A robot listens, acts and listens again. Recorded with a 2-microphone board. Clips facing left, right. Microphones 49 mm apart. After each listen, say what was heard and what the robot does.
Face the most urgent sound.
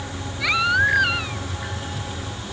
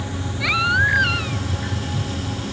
Turn 30° left.
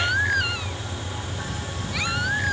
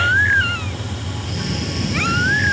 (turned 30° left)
So it is at 30° right. Turn 30° right.
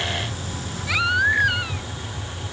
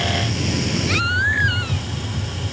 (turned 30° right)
Facing the baby crying.